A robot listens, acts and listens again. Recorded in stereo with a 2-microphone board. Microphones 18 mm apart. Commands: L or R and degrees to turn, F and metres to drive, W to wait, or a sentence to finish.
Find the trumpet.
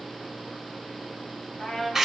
L35
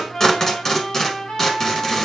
L105
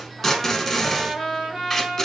R40
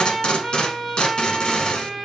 Facing the trumpet.